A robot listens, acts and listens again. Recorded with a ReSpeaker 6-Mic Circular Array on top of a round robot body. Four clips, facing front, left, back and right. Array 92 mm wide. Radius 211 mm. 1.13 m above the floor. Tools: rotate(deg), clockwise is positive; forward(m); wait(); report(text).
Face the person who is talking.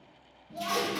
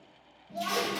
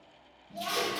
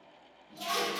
rotate(-75)
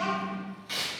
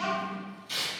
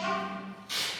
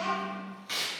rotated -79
report("Found it: a child speaking, straight ahead, 1 to 2 m away.")